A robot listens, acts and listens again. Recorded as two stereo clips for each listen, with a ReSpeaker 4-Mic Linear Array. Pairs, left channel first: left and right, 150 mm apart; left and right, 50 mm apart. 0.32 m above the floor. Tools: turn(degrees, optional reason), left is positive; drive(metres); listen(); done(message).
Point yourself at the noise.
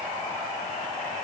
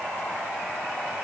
listen()
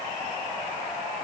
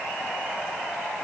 listen()
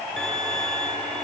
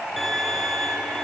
turn(degrees=30)
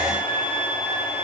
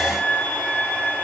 turn(degrees=145, reason="So it is at 145° left.")
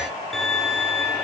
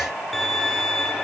done("Facing the violin.")